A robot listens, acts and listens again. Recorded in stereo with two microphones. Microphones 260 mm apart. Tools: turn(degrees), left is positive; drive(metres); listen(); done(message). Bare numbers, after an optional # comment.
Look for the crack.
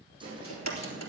turn(90)
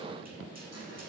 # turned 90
done("Facing where the crack came from. I can't hear it now.")